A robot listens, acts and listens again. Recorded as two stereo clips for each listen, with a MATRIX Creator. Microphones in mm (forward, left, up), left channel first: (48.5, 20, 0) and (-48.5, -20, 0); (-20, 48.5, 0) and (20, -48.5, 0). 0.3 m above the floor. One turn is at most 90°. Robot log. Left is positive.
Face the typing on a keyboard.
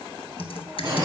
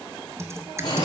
end: Facing the typing on a keyboard, under 1 m away.